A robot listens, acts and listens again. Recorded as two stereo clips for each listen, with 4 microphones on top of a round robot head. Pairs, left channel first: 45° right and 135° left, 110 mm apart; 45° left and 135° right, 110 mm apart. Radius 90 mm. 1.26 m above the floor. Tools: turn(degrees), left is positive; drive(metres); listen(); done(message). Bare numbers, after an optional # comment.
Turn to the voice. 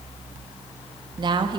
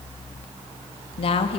# The woman speaking: 85° left.
turn(85)
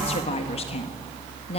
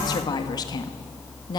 # The woman speaking is now 10° right.
turn(-10)
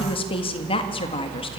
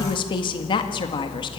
done("Found it: a woman speaking, straight ahead, 1 to 2 m away.")